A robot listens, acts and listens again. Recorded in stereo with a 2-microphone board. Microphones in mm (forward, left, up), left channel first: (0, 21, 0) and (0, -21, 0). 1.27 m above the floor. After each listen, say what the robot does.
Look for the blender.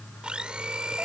Turn 25° right.
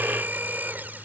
Turn 130° right.
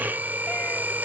Turn 45° right.
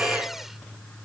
Keep listening.
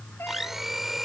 Found it: a blender, straight ahead.